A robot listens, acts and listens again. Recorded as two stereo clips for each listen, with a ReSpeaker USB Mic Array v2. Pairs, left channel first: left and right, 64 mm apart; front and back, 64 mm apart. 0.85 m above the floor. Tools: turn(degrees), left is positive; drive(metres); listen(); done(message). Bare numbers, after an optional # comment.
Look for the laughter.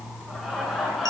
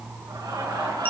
# The laughter: straight behind.
turn(180)
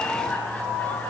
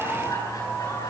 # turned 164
# The laughter is now 20° left.
turn(20)
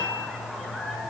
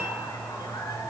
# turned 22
done("Facing the laughter.")